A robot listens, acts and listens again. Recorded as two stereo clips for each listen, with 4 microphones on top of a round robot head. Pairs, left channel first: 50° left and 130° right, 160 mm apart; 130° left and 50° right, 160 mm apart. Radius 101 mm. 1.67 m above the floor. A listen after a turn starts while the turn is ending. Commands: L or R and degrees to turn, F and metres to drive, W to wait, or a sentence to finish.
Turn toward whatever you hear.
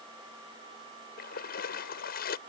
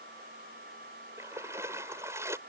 L20
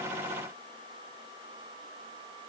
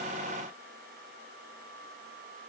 Facing where the splash came from. I can't hear it now.